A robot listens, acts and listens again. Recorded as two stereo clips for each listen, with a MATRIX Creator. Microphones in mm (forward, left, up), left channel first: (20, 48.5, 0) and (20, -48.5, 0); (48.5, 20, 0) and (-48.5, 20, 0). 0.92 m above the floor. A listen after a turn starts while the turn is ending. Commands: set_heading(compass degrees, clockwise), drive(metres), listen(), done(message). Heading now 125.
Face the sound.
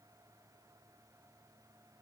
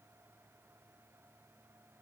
listen()
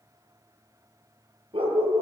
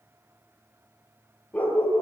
set_heading(200)
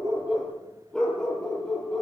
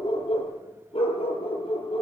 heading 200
done("Facing the dog barking, over 4 m away.")